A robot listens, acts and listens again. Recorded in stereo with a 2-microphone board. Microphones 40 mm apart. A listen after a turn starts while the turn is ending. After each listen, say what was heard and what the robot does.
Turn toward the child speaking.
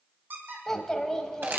Turn 30° left.
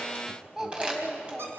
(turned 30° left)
So it is at 10° right. Turn 10° right.
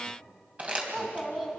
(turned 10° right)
Found it: a child speaking, straight ahead, 2 to 4 m away.